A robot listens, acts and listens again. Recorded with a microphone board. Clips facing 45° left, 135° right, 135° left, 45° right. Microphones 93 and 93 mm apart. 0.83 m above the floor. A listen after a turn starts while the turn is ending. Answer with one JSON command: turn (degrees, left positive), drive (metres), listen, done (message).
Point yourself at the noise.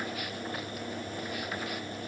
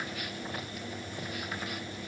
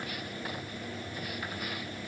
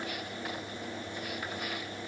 {"listen": true}
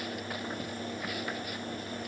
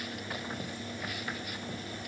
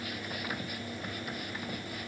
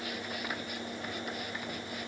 {"listen": true}
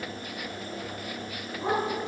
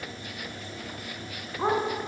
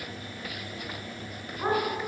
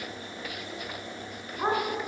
{"turn": -110}
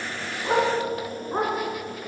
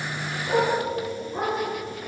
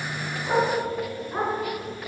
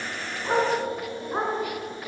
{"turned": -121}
{"turn": 20}
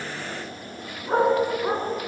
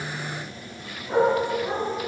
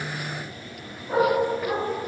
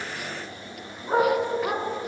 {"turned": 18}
{"done": "Facing the dog barking."}